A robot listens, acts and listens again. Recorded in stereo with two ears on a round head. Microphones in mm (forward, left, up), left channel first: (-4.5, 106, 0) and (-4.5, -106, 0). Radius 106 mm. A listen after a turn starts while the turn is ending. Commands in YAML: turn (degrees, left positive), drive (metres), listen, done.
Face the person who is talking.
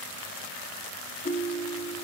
listen: true
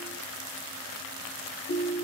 listen: true
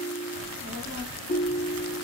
turn: 65
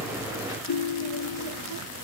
turn: 50
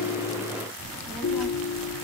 done: "Facing the child speaking."